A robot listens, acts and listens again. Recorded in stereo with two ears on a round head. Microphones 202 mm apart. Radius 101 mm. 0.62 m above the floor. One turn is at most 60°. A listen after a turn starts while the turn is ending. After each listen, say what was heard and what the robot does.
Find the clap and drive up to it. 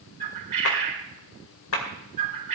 The clap: about 65° left or 115° left. Turn 60° left.
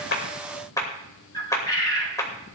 So it is at 15° left. Turn 15° left.
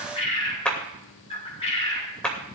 Drive 1.0 m forward.
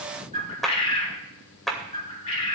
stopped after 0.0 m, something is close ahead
Something is in my way. I am facing the clap but have not reached it.